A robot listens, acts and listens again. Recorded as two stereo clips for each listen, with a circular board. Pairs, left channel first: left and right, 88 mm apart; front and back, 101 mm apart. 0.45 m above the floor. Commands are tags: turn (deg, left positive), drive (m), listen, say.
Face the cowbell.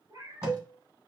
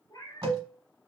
<turn deg="-165"/>
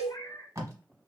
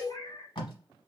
<turn deg="-70"/>
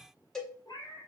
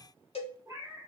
<say>Found it: a cowbell, straight ahead.</say>